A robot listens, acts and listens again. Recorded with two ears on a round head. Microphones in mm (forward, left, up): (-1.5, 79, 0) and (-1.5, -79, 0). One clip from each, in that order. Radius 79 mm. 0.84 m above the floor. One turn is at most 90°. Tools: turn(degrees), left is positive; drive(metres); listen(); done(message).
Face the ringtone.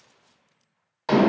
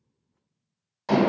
listen()
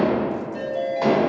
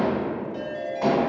turn(degrees=-60)
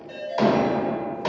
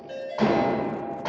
done("Found it: a ringtone, straight ahead, 1 to 2 m away.")